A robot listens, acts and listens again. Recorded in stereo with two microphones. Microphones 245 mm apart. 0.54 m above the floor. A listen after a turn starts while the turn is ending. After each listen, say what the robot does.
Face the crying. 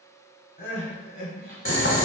Turn 35° left.
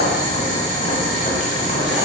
Keep listening.
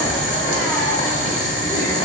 Keep listening.
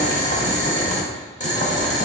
I heard crying, but can't make it out now. It was about straight ahead or 110° left.